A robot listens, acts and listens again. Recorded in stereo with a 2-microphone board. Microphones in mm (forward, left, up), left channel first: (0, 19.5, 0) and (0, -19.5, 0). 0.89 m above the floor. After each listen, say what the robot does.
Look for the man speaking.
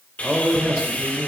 Turn 25° right.
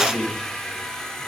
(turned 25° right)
Found it: a man speaking, straight ahead.